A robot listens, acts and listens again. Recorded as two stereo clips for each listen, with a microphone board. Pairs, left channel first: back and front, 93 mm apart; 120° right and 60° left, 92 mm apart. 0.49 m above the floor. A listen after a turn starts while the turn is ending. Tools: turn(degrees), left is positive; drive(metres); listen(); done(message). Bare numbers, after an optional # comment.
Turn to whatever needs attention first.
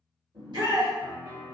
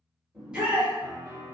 # The shout: 20° right.
turn(-20)
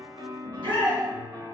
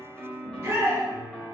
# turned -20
done("Facing the shout.")